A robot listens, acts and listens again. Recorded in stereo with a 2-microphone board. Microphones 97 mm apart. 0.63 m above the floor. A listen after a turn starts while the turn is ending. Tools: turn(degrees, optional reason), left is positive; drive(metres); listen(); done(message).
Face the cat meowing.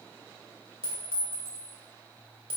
listen()
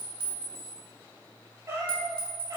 turn(degrees=-40, reason="The cat meowing: about 40° right or 140° right.")
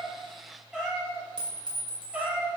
turn(degrees=-15, reason="So it is at 15° right.")
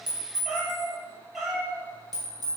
done("Found it: a cat meowing, straight ahead.")